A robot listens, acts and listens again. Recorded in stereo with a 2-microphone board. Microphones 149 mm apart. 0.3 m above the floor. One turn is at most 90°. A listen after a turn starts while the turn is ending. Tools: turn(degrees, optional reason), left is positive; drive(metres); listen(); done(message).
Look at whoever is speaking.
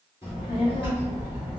turn(degrees=35, reason="The child speaking: about 35° left or 145° left.")
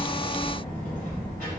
turn(degrees=90, reason="So it is at 105° left.")
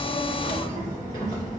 turn(degrees=35, reason="The child speaking is now 35° left.")
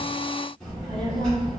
done("Facing the child speaking, 1 to 2 m away.")